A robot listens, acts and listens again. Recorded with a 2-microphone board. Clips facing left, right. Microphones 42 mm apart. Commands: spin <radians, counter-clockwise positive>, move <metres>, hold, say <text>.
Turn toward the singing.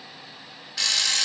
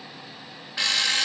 hold
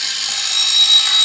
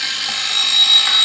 hold
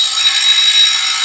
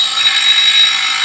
say I can't make out singing to turn to.